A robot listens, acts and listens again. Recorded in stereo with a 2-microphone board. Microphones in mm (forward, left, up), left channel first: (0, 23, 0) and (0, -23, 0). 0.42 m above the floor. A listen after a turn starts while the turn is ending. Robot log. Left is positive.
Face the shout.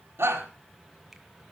note: The shout: about 60° right or 120° right.
cmd yaw -60
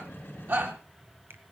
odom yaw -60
note: So it is at 50° right.
cmd yaw -50
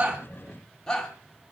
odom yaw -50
note: The shout is now 10° left.
cmd yaw +10
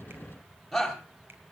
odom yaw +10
end: Found it: a shout, straight ahead.